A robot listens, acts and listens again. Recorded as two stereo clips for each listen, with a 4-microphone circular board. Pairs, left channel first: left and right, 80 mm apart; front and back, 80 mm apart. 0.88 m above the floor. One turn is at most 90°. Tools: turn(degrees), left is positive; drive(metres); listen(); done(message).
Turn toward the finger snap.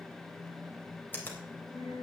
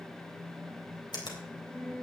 turn(degrees=25)
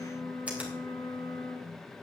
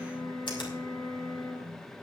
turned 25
listen()
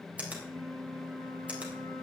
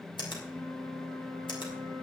turn(degrees=-15)
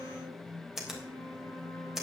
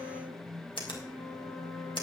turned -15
done("Facing the finger snap.")